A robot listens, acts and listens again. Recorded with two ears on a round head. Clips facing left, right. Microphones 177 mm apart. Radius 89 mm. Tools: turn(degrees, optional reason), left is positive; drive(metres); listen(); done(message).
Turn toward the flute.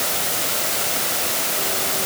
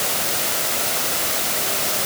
listen()
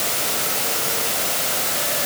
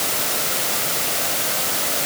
listen()
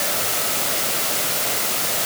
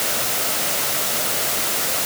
done("I can't make out a flute to turn to.")